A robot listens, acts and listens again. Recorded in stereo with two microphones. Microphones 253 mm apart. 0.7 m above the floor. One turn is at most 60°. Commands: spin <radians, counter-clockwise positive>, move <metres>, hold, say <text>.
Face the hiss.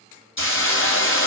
spin 0.96
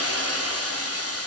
spin 1.05
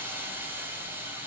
spin -0.17
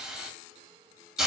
say Found it: a hiss, straight ahead, 1 to 2 m away.